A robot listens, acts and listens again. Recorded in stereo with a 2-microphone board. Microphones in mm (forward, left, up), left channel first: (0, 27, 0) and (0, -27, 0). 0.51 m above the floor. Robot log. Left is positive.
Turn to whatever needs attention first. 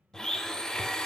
cmd idle
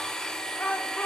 note: The shout: about 40° left or 140° left.
cmd yaw +40
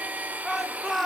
end: Found it: a shout, straight ahead.